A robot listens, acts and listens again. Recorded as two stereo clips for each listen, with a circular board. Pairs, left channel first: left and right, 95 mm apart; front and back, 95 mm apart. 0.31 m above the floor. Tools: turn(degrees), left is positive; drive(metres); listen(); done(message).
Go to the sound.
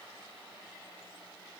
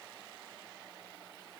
listen()
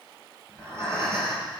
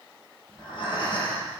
turn(degrees=-30)
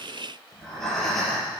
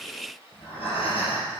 drive(metres=1.0)
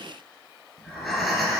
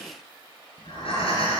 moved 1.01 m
drive(metres=1.0)
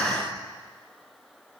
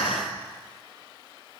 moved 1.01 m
drive(metres=1.0)
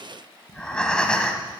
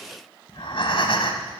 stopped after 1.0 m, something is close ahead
turn(degrees=10)
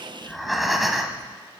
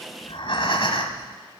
done("Arrived at the breathing, straight ahead.")